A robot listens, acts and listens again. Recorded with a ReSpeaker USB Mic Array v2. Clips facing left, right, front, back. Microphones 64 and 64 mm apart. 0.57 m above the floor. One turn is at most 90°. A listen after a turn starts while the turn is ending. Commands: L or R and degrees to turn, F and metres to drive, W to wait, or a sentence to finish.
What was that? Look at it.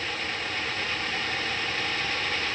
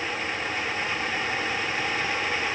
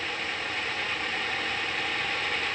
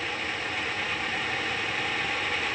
W
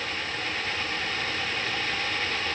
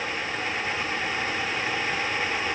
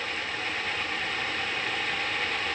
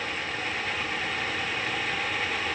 W
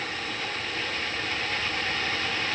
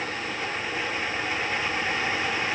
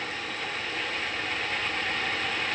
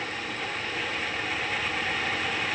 I can't make out anything.